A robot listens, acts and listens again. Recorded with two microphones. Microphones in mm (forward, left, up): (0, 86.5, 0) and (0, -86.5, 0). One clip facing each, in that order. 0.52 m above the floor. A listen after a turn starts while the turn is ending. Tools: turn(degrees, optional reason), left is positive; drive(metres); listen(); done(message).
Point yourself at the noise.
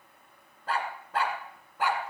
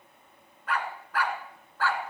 turn(degrees=20, reason="The dog barking: about 20° left or 160° left.")
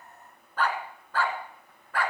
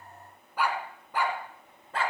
turn(degrees=-30, reason="So it is at 30° right.")
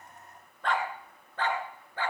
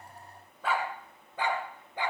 turn(degrees=-20, reason="The dog barking is now 20° right.")
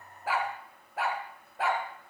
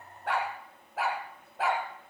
done("Found it: a dog barking, straight ahead, 2 to 4 m away.")